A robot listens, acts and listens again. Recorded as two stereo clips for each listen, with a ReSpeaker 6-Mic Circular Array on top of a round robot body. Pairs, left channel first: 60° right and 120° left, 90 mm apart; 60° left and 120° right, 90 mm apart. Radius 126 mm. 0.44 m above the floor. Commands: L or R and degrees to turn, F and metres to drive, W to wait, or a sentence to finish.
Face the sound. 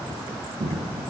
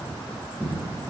L140
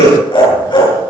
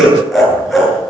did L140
R30
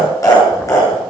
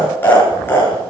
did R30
Found it: laughter, straight ahead.